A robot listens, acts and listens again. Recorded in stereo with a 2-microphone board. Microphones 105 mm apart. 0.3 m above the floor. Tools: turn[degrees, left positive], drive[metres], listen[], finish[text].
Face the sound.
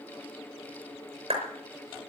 Thought: The clap: about 65° right or 115° right.
Action: turn[-65]
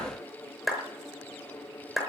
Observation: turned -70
Action: finish[Found it: a clap, straight ahead, over 4 m away.]